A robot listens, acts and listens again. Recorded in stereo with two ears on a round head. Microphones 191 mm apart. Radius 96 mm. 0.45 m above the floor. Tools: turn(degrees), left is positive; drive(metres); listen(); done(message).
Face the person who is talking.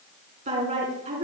turn(degrees=-35)
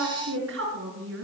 turn(degrees=-110)
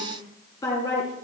turn(degrees=15)
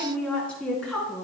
done("Facing the woman speaking.")